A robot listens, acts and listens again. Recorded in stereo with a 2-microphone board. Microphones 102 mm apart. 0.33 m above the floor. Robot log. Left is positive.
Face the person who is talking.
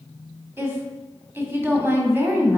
note: The woman speaking: about 20° right or 160° right.
cmd yaw -20
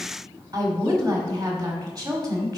note: So it is at 135° right.
cmd yaw -135
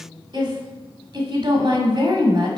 note: The woman speaking is now 55° right.
cmd yaw -55
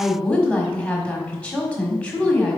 note: The woman speaking is now 15° left.
cmd yaw +15
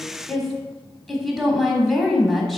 end: Facing the woman speaking, 1 to 2 m away.